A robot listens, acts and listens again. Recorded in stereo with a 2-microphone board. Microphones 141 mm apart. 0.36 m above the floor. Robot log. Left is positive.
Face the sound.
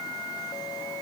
cmd idle
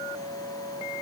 cmd idle
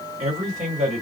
note: The man speaking: about 60° right or 120° right.
cmd yaw -60
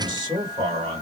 note: So it is at 40° right.
cmd yaw -40
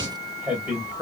note: The man speaking is now 10° right.
cmd yaw -10
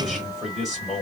end: Found it: a man speaking, straight ahead, 1 to 2 m away.